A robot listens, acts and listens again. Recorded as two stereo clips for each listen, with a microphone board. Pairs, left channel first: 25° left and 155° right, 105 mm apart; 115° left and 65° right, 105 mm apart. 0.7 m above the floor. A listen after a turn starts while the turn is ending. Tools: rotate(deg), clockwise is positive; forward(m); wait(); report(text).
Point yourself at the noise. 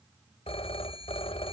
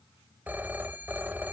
report("Facing the phone ringing.")